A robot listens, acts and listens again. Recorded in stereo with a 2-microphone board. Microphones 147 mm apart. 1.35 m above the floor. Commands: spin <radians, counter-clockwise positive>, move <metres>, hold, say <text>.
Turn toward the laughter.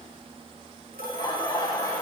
spin 0.35
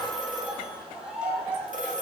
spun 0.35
spin -0.17
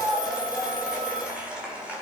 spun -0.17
spin -0.17
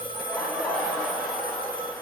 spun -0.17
say Found it: laughter, straight ahead, over 4 m away.